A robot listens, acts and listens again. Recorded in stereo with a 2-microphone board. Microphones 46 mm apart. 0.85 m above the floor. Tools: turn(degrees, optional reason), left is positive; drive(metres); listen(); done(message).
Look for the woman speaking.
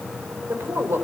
turn(degrees=-65, reason="The woman speaking: about 65° right or 115° right.")
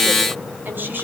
turn(degrees=-45, reason="So it is at 45° right.")
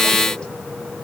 listen()
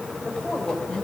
turn(degrees=20, reason="The woman speaking is now 20° left.")
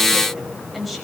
done("Facing the woman speaking.")